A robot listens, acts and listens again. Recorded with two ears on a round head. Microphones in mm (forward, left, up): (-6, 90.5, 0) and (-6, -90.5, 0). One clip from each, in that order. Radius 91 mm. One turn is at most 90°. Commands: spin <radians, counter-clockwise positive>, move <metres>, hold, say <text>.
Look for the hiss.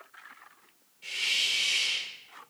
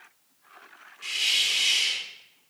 spin -1.05
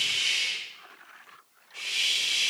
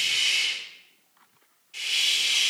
spin -0.87
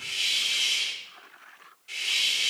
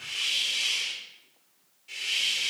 spin 0.26
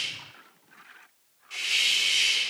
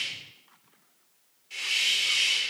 say Facing the hiss, 1 to 2 m away.